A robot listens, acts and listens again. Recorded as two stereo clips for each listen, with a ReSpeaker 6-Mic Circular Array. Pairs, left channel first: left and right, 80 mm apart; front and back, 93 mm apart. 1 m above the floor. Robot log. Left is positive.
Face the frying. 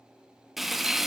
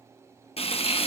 end: Found it: frying, straight ahead, under 1 m away.